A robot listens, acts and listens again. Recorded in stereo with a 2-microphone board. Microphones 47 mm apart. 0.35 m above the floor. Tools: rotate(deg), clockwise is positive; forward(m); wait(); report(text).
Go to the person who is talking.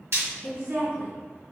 rotate(50)
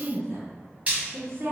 rotate(70)
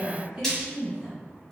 rotate(20)
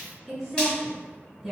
rotate(10)
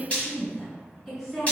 forward(1.0)
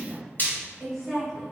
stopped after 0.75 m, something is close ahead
report("I am next to the woman speaking.")